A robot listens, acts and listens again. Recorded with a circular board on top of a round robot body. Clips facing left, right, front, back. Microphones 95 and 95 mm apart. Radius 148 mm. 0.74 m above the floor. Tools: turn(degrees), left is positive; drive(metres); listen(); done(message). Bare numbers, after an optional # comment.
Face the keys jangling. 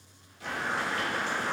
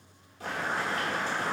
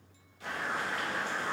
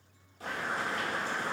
listen()
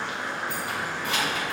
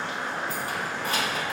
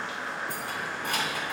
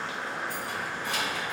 # The keys jangling: 40° right.
turn(-40)
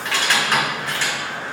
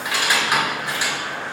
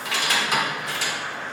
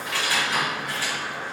# The keys jangling is now 15° right.
turn(-15)
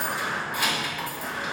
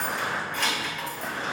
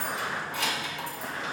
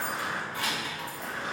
done("Facing the keys jangling.")